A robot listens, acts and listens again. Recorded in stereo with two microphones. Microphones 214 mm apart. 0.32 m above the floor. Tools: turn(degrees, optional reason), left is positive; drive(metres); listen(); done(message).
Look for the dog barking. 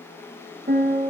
listen()
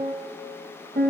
listen()
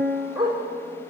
turn(degrees=-20, reason="The dog barking: about 20° right or 160° right.")
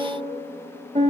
listen()
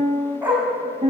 turn(degrees=-30)
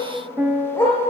turn(degrees=15, reason="So it is at 15° left.")
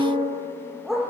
done("Facing the dog barking, over 4 m away.")